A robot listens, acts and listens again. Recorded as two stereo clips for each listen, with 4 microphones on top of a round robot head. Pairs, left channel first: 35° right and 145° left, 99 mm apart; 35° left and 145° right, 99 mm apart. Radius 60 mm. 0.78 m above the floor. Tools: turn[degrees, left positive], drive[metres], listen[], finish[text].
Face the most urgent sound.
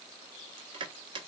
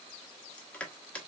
Action: listen[]
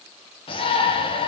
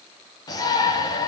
Thought: The shout: 10° right.
Action: turn[-10]
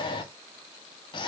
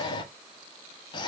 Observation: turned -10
Action: finish[Found it: a shout, straight ahead, under 1 m away.]